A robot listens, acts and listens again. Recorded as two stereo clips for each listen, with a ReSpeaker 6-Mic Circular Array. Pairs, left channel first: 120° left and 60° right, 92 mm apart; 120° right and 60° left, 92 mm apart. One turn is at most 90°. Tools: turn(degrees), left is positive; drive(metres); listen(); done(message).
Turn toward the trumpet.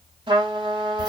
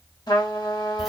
turn(degrees=-80)
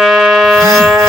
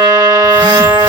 turn(degrees=30)
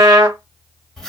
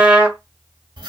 turn(degrees=-15)
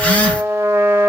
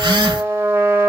done("Facing the trumpet, under 1 m away.")